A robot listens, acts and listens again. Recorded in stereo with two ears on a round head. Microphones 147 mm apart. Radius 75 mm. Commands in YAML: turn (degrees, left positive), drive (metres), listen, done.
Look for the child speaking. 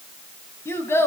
turn: 15
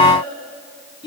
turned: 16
turn: 150
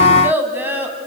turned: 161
turn: -10
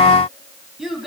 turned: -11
done: "Facing the child speaking, 2 to 4 m away."